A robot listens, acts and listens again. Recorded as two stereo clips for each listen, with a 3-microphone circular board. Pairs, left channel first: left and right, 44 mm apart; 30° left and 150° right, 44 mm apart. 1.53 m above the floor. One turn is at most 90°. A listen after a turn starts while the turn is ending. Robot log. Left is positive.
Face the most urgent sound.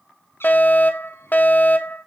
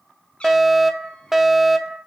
note: The fire alarm: 125° left.
cmd yaw +90
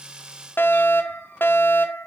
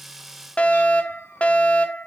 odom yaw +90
note: The fire alarm is now 85° left.
cmd yaw +85
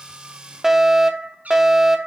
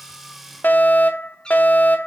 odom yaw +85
note: The fire alarm is now 10° right.
cmd yaw -10
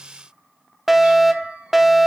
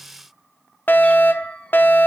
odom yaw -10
end: Found it: a fire alarm, straight ahead, 1 to 2 m away.